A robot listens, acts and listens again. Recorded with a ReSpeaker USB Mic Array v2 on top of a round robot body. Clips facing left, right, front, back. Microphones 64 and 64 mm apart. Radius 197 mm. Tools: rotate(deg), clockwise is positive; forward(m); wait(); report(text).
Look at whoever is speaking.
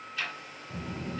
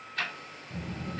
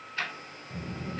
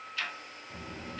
rotate(-125)
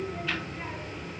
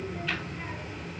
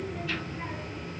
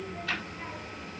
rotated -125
report("Facing the child speaking.")